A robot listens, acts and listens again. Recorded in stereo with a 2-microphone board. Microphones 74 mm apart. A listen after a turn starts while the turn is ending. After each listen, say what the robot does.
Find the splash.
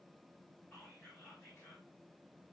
Keep listening.
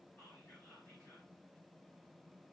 Keep listening.
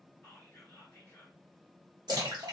Turn 75° right.
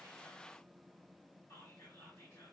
Keep listening.
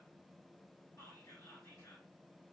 I heard a splash, but can't make it out now. It was about straight ahead or 30° right.